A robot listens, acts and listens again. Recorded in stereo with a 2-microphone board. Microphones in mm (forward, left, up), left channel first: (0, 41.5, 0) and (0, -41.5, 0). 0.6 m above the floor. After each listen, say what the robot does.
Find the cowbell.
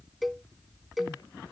Turn 30° left.
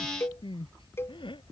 Turn 150° left.
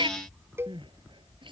Turn 30° right.
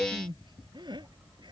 Turn 10° right.
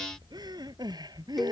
Keep listening.
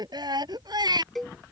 Found it: a cowbell, straight ahead.